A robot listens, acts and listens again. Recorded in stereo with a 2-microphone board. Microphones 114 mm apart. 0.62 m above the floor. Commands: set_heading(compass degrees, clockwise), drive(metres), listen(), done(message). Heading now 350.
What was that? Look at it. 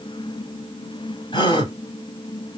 set_heading(305)
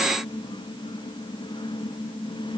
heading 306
listen()
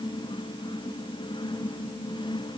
done("I heard a gasp, but can't make it out now. It was about straight ahead or 95° left.")